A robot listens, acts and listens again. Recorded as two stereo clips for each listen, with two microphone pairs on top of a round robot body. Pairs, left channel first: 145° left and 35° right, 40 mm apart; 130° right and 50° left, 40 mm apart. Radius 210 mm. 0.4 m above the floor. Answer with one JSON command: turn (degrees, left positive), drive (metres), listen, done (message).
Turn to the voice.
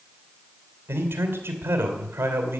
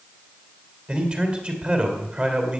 {"turn": -10}
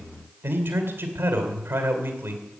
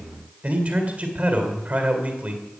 {"done": "Facing the man speaking."}